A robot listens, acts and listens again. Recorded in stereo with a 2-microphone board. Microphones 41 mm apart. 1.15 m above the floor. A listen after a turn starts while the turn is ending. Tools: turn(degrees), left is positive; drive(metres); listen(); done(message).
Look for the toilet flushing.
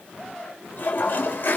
turn(degrees=50)
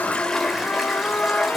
done("Facing the toilet flushing.")